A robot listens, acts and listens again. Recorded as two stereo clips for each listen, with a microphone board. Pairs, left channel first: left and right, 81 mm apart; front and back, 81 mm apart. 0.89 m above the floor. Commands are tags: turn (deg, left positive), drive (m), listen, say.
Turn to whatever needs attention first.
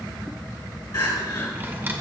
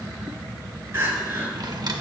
<turn deg="120"/>
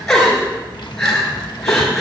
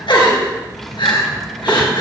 <say>Facing the crying.</say>